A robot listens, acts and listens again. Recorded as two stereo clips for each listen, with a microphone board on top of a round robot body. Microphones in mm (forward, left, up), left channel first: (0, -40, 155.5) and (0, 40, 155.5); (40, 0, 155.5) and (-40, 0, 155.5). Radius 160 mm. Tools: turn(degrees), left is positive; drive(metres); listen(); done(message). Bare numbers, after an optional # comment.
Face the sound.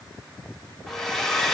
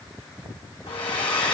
done("Facing the hair dryer.")